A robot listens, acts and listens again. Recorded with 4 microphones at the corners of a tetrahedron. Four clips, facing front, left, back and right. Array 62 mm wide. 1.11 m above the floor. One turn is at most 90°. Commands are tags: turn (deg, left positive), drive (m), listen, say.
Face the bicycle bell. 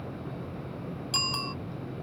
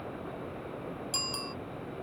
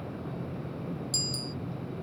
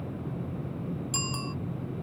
<say>Facing the bicycle bell.</say>